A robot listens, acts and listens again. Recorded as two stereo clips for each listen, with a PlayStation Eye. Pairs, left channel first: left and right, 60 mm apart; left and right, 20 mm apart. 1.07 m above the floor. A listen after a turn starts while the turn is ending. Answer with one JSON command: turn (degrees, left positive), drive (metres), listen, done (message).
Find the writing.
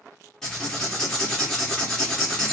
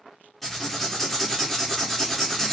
{"turn": 30}
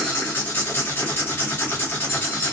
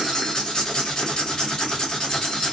{"turn": 145}
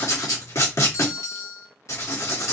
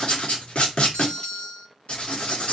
{"turn": 55}
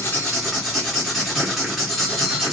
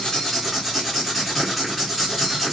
{"done": "Facing the writing, 1 to 2 m away."}